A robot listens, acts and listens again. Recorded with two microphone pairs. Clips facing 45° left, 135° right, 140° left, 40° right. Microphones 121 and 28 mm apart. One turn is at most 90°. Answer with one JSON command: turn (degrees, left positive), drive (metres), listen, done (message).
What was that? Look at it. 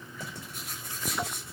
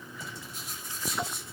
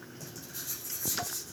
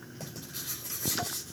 {"turn": 10}
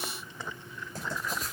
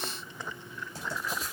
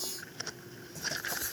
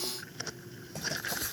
{"done": "Facing the writing, over 4 m away."}